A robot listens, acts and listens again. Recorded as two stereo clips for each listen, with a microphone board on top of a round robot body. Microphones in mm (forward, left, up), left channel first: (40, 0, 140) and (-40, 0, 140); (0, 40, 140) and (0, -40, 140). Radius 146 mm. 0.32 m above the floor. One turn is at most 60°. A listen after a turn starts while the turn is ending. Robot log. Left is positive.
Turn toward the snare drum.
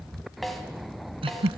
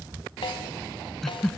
note: The snare drum: 90° left.
cmd yaw +60
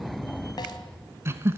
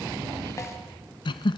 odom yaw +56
note: Nothing new. It was at 35° left.
cmd yaw +35
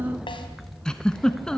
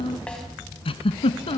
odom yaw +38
cmd idle
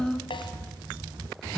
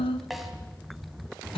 end: Facing the snare drum.